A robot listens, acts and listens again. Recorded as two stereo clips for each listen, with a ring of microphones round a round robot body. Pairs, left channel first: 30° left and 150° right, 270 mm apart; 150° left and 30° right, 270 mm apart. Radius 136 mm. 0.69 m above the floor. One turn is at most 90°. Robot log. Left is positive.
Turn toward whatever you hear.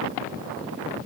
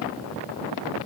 cmd idle
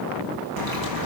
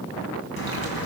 note: The splash: 160° right.
cmd yaw -90
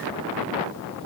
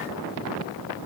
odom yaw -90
note: Nothing new. It was at 70° right.
cmd yaw -70
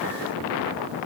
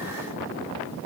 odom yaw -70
end: Facing where the splash came from. I can't hear it now.